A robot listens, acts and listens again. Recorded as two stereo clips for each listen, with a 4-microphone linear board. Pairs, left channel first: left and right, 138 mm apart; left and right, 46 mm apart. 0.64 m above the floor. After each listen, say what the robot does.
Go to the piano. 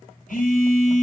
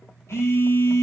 Keep listening.
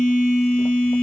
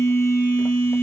Keep listening.
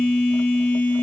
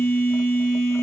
I can't make out a piano to turn to.